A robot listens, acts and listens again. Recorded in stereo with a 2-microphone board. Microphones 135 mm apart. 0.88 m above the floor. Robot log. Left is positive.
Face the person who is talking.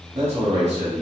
note: The man speaking: about 50° right or 130° right.
cmd yaw -50
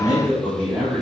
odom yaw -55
note: So it is at 10° right.
cmd yaw -10
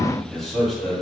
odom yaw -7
end: Facing the man speaking.